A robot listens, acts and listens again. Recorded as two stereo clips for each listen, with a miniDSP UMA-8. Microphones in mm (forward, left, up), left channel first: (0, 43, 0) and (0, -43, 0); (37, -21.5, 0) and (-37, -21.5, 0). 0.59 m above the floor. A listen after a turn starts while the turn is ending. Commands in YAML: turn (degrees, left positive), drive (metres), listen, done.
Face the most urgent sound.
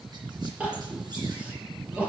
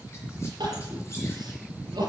turn: -165
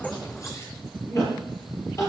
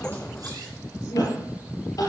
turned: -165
turn: 35
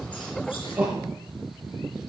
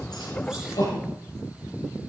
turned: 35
turn: -15
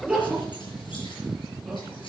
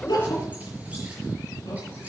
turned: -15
done: "Found it: crying, straight ahead, over 4 m away."